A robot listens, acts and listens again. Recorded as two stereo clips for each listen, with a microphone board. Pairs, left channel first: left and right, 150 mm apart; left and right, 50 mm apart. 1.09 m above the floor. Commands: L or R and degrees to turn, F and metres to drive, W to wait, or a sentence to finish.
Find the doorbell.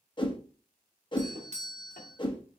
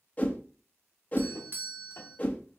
R50
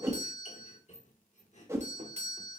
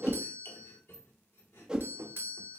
R65
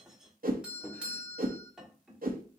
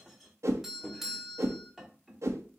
R10
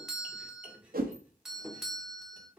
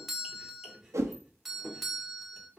Facing the doorbell.